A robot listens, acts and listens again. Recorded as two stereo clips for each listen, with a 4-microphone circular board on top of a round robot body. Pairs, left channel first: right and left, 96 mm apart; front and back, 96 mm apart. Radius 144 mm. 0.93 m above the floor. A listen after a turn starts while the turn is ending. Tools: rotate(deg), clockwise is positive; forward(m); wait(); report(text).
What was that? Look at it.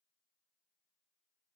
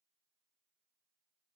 wait()
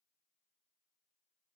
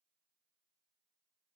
wait()
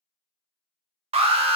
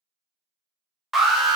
rotate(-90)
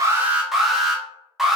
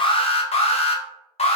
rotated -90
report("Found it: an alarm, straight ahead, under 1 m away.")